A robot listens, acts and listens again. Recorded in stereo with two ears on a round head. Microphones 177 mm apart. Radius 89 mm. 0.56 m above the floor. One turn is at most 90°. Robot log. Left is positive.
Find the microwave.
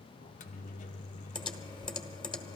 note: The microwave: about 40° left or 140° left.
cmd yaw +40
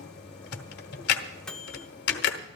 end: Found it: a microwave, straight ahead, under 1 m away.